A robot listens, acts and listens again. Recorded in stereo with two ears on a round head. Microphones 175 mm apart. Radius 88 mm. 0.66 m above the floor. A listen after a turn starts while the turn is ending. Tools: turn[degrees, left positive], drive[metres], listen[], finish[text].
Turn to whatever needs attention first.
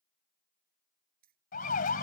Thought: The siren: about 45° left or 135° left.
Action: turn[45]
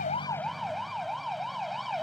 Action: finish[Facing the siren.]